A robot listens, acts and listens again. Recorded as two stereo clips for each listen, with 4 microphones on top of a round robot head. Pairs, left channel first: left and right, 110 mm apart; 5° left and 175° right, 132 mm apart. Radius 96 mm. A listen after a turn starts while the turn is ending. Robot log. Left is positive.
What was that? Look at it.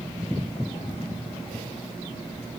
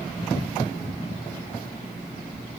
cmd idle
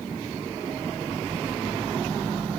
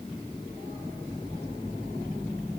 cmd idle
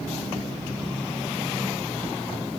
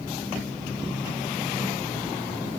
end: I can't make out anything to turn to.